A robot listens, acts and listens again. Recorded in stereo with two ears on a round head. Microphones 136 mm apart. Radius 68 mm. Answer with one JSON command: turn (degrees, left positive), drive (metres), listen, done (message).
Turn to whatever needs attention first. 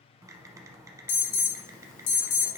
{"turn": 60}
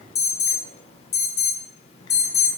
{"turn": 50}
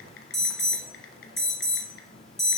{"done": "Facing the alarm."}